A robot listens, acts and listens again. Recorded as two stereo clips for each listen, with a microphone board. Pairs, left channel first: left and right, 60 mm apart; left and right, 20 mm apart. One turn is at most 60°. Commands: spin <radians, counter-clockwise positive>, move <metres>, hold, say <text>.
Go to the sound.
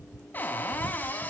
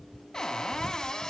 spin 0.52
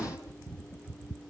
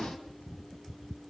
hold
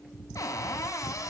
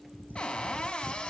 spin 1.05
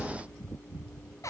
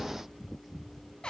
spin 0.96
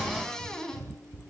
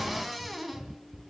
spin 0.17
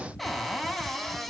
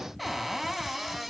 move 1.0
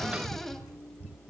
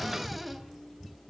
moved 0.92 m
move 1.0
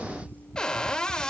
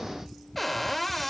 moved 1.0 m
spin 0.26
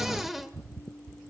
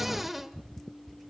move 1.0
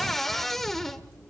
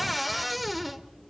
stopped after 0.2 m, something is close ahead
say I am next to the cupboard door.